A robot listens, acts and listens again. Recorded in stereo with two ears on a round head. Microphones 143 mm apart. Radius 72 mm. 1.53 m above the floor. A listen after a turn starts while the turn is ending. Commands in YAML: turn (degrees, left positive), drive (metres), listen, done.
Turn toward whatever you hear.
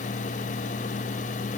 listen: true
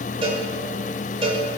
turn: -35
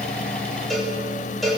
done: "Found it: a cowbell, straight ahead."